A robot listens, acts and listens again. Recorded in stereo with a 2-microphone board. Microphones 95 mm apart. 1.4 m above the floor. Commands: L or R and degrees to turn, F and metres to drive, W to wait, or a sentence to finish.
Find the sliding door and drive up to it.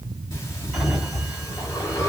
R30
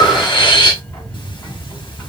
L25
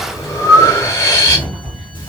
F1.0
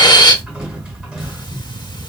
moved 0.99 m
R10
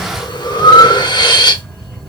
W
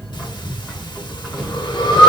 F1.0
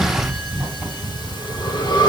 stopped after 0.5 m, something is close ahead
I am next to the sliding door.